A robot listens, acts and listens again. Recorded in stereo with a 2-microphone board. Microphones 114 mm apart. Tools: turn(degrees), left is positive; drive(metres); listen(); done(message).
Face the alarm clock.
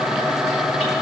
listen()
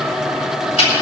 listen()
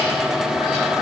done("I can't make out an alarm clock, only ticking.")